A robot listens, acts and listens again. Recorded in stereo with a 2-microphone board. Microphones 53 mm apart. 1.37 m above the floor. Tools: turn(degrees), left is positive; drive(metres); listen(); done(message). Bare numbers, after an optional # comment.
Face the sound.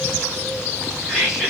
turn(-30)
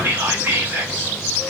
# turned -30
# So it is at 140° right.
turn(-140)
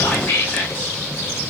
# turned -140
# The whispering is now 30° left.
turn(30)
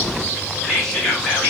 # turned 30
# The whispering is now 10° left.
turn(10)
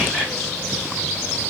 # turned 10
listen()
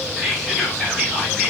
done("Found it: whispering, straight ahead.")